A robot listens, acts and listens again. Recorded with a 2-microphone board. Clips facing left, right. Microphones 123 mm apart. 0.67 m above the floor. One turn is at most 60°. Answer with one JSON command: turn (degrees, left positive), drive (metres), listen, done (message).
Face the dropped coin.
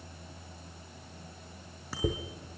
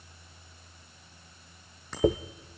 {"turn": -60}
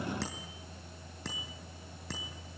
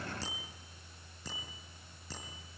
{"listen": true}
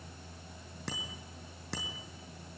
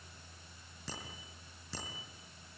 {"done": "I heard a dropped coin, but can't make it out now. It was about 5° right or 55° right."}